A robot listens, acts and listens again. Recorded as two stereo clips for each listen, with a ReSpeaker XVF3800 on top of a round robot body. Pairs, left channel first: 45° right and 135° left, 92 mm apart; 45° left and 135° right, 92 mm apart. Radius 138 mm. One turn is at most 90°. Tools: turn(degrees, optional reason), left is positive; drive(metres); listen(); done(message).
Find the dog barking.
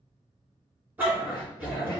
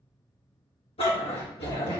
turn(degrees=60, reason="The dog barking: 60° left.")
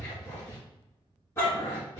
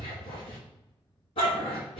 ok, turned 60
turn(degrees=20, reason="The dog barking is now 20° left.")
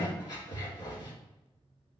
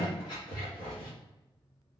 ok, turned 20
done("Found it: a dog barking, straight ahead, 2 to 4 m away.")